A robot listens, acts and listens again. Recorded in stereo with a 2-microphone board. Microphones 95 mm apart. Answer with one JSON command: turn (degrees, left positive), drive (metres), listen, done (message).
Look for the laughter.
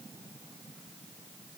{"listen": true}
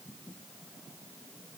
{"listen": true}
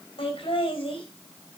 {"turn": 65}
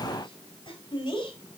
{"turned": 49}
{"turn": 55}
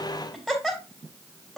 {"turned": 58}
{"done": "Facing the laughter, over 4 m away."}